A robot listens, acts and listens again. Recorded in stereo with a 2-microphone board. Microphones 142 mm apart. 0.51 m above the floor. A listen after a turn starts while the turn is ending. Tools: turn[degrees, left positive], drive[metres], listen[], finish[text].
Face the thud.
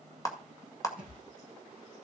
Action: turn[90]
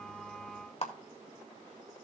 Action: finish[I heard a thud from this way, but can't make it out now.]